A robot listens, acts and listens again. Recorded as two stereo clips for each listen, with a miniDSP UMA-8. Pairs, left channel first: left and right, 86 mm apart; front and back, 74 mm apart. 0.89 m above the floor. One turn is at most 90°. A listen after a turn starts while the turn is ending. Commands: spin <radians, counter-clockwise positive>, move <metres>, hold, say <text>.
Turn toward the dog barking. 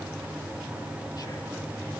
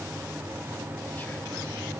hold
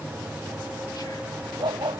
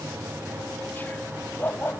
spin -1.13
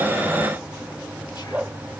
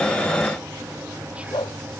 spin -0.26
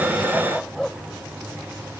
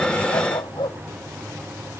say Found it: a dog barking, straight ahead.